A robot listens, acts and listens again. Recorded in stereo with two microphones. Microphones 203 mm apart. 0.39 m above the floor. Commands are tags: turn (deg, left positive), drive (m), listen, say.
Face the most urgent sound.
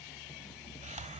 <listen/>
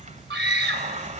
<turn deg="-60"/>
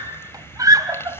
<turn deg="-20"/>
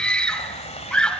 <say>Facing the scream, 2 to 4 m away.</say>